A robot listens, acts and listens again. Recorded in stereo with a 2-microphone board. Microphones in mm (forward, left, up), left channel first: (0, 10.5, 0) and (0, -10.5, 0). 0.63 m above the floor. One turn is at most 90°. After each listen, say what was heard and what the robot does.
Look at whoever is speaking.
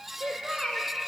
The child speaking: about 70° right or 110° right. Turn 70° right.
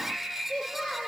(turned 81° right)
So it is at 15° right. Turn 15° right.
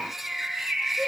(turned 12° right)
Keep listening.
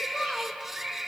Found it: a child speaking, straight ahead.